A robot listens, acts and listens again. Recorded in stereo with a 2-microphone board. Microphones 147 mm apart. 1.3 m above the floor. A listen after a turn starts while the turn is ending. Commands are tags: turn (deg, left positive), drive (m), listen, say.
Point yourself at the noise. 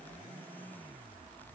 <listen/>
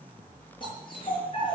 <turn deg="35"/>
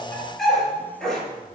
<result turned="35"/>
<say>Found it: a dog barking, straight ahead, over 4 m away.</say>